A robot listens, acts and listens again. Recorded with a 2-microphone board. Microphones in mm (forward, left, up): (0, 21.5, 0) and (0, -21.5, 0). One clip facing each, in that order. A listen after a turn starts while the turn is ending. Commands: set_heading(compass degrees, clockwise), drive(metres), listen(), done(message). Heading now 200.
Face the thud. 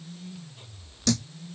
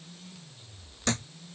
set_heading(235)
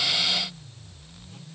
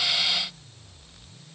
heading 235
listen()
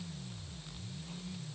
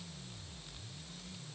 done("I heard a thud, but can't make it out now. It was about straight ahead or 110° right.")